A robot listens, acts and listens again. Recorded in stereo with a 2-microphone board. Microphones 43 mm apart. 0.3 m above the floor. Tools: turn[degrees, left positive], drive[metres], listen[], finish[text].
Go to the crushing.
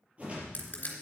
Thought: The crushing: about 35° left or 145° left.
Action: turn[35]
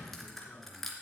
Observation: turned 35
Action: drive[1.0]
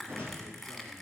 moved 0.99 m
Action: drive[1.0]
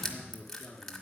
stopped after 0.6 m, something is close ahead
Thought: The crushing is now 10° left.
Action: turn[10]
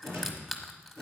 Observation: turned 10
Action: finish[I am next to the crushing.]